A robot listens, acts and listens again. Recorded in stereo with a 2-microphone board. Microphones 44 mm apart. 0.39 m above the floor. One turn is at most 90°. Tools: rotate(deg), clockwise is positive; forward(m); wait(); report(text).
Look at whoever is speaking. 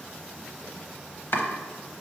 wait()
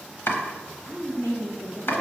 rotate(-60)
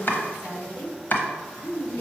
rotate(-65)
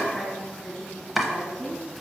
rotate(-10)
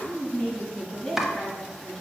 report("Found it: a woman speaking, straight ahead.")